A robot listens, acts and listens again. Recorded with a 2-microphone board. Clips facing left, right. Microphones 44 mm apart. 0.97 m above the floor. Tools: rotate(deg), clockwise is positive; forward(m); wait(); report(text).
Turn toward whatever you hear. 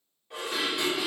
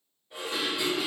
rotate(-75)
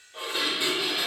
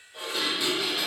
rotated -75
rotate(-30)
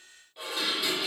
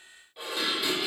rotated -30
report("Facing the dishes clattering.")